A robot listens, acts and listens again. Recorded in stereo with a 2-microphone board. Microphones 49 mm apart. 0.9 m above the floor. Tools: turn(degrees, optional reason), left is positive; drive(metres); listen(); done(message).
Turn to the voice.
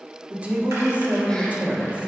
turn(degrees=-30, reason="The woman speaking: about 30° right or 150° right.")
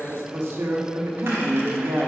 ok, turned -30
turn(degrees=-120, reason="So it is at 120° right.")
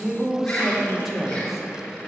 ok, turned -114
done("Found it: a woman speaking, straight ahead, 1 to 2 m away.")